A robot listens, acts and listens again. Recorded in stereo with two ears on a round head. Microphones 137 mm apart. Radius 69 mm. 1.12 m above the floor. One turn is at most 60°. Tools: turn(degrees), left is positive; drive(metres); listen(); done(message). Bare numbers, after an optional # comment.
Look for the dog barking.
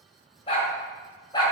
# The dog barking: about 25° left or 155° left.
turn(25)
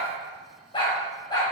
# The dog barking: about 25° left or 155° left.
turn(25)
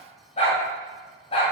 # The dog barking: about 35° left or 145° left.
turn(35)
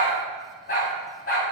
# So it is at 120° left.
turn(60)
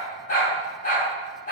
# The dog barking is now 55° left.
turn(55)
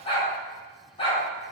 # The dog barking is now 35° left.
turn(35)
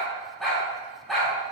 done("Facing the dog barking, 2 to 4 m away.")